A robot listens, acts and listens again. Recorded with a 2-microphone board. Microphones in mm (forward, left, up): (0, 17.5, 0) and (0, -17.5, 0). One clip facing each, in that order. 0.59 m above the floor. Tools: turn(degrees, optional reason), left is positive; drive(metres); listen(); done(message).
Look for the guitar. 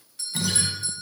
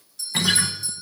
turn(degrees=-50, reason="The guitar: about 50° right or 130° right.")
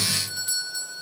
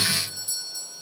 turn(degrees=-80, reason="So it is at 80° right.")
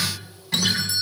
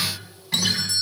done("Facing the guitar.")